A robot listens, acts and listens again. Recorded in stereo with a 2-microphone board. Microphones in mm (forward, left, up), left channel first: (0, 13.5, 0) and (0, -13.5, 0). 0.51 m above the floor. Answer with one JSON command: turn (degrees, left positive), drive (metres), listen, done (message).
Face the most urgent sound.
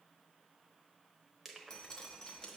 {"listen": true}
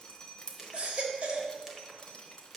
{"turn": -40}
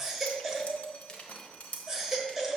{"done": "Facing the baby crying, 1 to 2 m away."}